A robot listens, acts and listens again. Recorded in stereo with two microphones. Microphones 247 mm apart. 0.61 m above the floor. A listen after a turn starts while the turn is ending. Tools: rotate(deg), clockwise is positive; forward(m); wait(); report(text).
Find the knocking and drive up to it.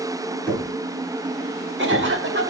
rotate(-30)
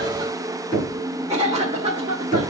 rotate(-145)
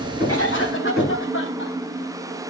forward(1.0)
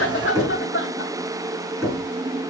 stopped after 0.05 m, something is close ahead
report("Blocked. The knocking is further on, straight ahead.")